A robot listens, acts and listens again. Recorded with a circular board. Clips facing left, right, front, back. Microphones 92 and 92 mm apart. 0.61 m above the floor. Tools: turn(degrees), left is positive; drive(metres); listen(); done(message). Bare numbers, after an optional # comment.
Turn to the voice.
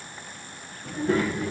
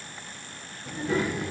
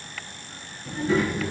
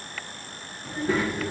# The child speaking: 135° left.
turn(135)
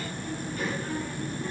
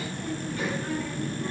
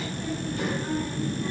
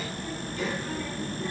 # The child speaking is now 25° right.
turn(-25)
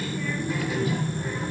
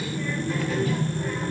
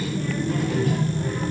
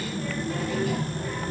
# The child speaking is now 20° left.
turn(20)
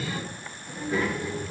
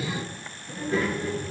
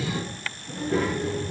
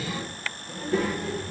done("Found it: a child speaking, straight ahead, over 4 m away.")